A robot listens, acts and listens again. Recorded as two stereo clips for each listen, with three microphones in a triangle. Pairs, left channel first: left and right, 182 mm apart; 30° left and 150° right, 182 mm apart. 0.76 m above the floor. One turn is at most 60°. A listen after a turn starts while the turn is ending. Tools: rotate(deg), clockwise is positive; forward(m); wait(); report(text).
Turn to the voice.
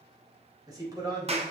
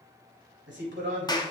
rotate(60)
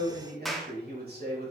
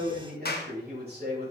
rotate(60)
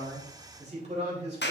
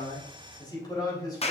rotate(40)
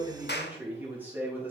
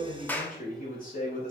rotate(10)
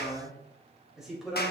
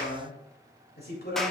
report("Facing the man speaking.")